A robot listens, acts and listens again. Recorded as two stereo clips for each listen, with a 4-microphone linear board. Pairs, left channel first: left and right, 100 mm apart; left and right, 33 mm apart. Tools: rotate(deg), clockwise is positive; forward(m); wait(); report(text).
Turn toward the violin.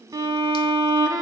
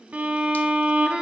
rotate(40)
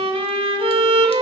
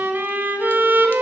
rotate(105)
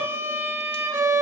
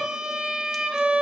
rotate(30)
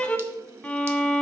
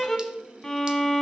rotate(-10)
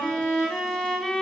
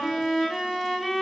report("Facing the violin.")